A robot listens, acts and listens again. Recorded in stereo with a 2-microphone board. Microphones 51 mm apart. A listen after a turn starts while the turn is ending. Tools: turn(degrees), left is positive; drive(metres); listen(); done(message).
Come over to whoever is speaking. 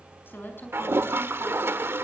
turn(degrees=45)
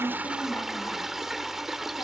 listen()
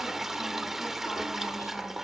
listen()
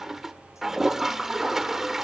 done("I heard a woman speaking, but can't make it out now. It was about straight ahead or 90° left. I did not reach it.")